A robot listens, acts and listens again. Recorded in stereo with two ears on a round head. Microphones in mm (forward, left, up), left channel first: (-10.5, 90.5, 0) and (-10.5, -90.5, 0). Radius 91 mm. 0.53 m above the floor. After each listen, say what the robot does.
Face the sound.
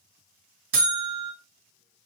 Turn 50° right.
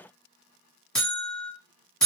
Found it: a buzzer, straight ahead.